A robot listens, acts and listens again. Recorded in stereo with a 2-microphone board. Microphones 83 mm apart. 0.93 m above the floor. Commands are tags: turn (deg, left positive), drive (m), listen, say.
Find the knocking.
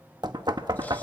<turn deg="-55"/>
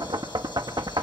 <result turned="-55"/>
<turn deg="-65"/>
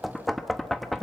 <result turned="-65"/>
<say>Facing the knocking, under 1 m away.</say>